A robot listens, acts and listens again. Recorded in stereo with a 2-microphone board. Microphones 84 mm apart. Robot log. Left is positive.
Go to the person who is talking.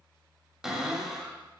cmd idle
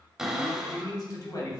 note: The man speaking: about 55° left or 125° left.
cmd yaw +55
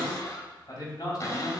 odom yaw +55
note: So it is at 55° left.
cmd yaw +55
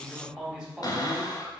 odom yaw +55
note: The man speaking is now 10° right.
cmd yaw -10
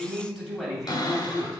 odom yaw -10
cmd fwd 1.0
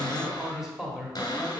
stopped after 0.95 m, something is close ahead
end: I am next to the man speaking.